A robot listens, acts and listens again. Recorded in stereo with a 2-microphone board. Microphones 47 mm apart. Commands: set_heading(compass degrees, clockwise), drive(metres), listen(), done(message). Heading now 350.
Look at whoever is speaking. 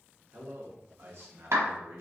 set_heading(45)
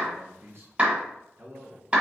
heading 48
set_heading(113)
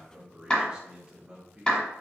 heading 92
set_heading(112)
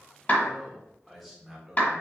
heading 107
done("Facing the man speaking, 1 to 2 m away.")